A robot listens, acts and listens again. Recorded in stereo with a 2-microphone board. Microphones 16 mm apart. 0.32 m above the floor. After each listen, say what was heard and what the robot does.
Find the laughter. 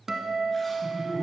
The laughter: about 55° left or 125° left. Turn 55° left.
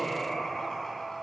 So it is at 60° left. Turn 60° left.
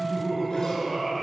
Found it: laughter, straight ahead.